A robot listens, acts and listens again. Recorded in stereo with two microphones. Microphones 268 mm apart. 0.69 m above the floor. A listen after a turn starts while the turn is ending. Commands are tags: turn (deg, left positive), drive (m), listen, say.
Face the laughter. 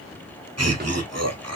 <turn deg="-65"/>
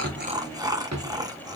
<turn deg="-15"/>
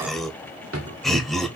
<say>Facing the laughter, 1 to 2 m away.</say>